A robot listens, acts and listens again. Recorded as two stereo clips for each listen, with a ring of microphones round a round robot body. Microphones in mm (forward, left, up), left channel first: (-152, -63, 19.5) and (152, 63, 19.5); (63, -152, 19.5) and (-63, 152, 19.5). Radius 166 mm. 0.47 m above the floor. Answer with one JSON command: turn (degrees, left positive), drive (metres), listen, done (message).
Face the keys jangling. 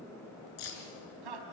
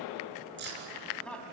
{"turn": 175}
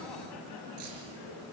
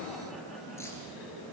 {"listen": true}
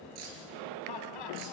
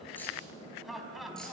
{"listen": true}
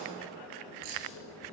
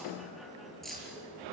{"turn": 20}
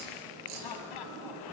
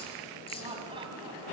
{"listen": true}
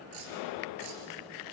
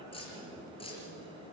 {"done": "Found it: keys jangling, straight ahead, over 4 m away."}